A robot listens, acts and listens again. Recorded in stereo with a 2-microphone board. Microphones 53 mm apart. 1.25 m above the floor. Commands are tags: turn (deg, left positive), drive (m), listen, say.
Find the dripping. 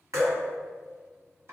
<turn deg="-90"/>
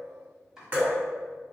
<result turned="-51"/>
<turn deg="-40"/>
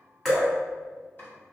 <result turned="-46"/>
<say>Facing the dripping, 1 to 2 m away.</say>